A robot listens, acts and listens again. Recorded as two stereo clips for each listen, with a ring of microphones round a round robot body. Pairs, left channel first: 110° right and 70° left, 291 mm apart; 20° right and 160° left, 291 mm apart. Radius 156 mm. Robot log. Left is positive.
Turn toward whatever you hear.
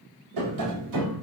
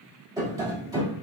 note: The tapping: 80° left.
cmd yaw +80
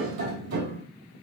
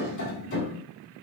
note: The tapping is now 30° left.
cmd yaw +30
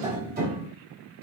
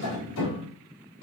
end: Found it: tapping, straight ahead.